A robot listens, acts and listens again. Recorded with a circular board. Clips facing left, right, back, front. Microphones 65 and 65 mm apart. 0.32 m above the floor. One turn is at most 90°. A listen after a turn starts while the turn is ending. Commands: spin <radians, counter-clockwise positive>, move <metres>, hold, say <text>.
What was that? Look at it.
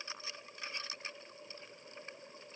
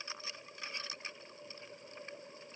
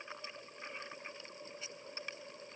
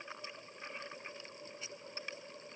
hold
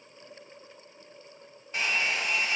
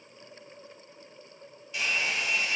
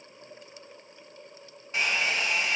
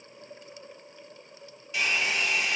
spin 1.57
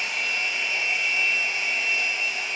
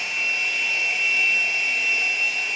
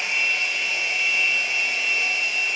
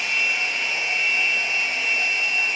spin 0.79
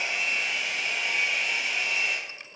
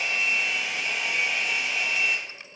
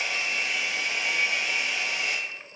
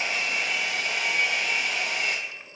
say Facing the hair dryer.